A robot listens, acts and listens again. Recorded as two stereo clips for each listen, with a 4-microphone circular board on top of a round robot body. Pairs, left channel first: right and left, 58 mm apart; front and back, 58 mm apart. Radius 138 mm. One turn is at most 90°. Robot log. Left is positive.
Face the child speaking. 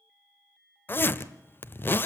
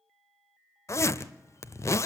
cmd idle
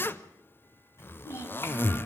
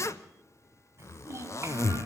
note: The child speaking: 130° right.
cmd yaw -90
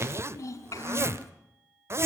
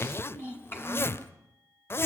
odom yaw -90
note: The child speaking is now 50° right.
cmd yaw -50
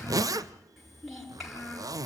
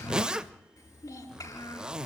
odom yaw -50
end: Found it: a child speaking, straight ahead.